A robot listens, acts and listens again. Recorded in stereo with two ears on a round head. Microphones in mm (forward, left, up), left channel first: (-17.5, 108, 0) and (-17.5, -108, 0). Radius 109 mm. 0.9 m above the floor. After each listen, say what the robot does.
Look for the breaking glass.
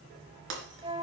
Turn 50° right.
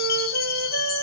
Keep listening.
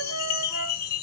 I heard breaking glass, but can't make it out now. It was about straight ahead or 80° right.